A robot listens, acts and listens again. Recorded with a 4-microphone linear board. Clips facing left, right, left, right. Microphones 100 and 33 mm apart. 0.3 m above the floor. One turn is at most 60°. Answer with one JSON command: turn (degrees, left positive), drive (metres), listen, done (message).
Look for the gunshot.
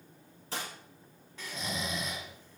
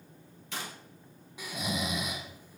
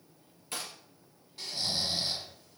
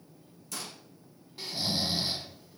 {"turn": 35}
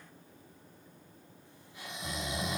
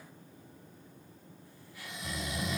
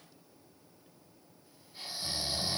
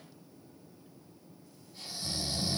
{"listen": true}
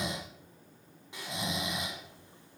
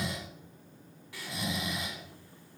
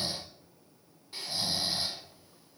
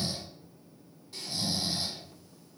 {"done": "I heard a gunshot, but can't make it out now. It was about straight ahead or 110° left."}